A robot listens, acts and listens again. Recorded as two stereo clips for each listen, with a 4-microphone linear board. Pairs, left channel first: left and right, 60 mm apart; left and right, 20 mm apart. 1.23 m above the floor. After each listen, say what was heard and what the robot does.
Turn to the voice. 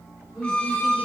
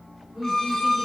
Turn 30° right.
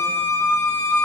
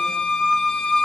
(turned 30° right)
Keep listening.
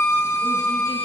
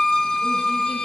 Keep listening.
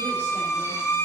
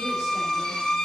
I heard a woman speaking, but can't make it out now. It was about 25° left or 145° right.